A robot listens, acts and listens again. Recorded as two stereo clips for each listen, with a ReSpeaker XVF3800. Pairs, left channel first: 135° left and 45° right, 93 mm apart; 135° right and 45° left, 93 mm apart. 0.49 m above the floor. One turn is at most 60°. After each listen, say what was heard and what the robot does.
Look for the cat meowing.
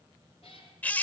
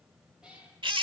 The cat meowing: 125° left. Turn 60° left.
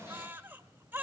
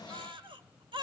Nothing new. It was at 65° left. Turn 60° left.
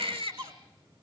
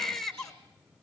Keep listening.
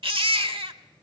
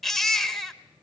I heard a cat meowing from this way, but can't make it out now.